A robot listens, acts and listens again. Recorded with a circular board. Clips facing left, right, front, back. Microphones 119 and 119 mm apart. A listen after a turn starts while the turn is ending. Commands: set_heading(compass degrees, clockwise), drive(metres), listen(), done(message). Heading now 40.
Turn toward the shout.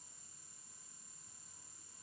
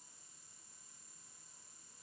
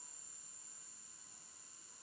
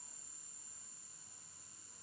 listen()
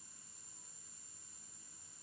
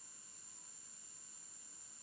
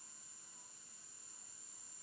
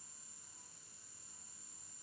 listen()
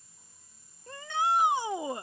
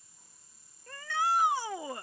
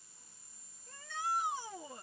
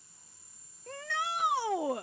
set_heading(240)
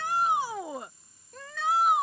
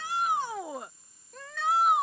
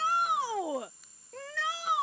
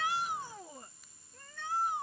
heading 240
done("Facing the shout.")